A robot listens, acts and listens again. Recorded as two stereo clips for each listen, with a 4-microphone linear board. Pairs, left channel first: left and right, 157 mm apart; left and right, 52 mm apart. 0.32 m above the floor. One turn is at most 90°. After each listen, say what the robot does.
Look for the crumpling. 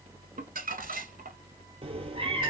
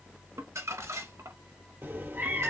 Turn 65° right.
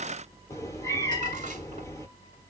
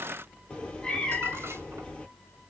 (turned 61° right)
Keep listening.
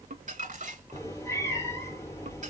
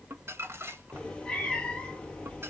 Turn 55° right.
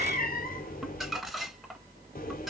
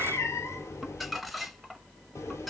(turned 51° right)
Facing the crumpling.